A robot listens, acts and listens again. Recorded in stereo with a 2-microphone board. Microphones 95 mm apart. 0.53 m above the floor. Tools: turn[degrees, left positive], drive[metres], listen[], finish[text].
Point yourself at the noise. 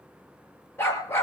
Thought: The dog barking: about 25° left or 155° left.
Action: turn[25]
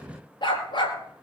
Thought: So it is at 125° left.
Action: turn[125]
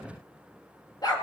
Thought: The dog barking is now 45° left.
Action: turn[45]
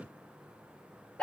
Thought: The dog barking is now 10° left.
Action: turn[10]
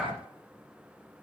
Action: finish[Found it: a dog barking, straight ahead.]